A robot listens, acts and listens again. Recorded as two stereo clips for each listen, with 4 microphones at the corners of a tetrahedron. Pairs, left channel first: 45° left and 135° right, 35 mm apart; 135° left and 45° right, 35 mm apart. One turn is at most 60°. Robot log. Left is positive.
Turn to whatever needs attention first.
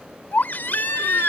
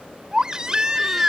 note: The baby crying: 20° left.
cmd yaw +20
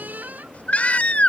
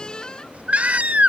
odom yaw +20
end: Found it: a baby crying, straight ahead.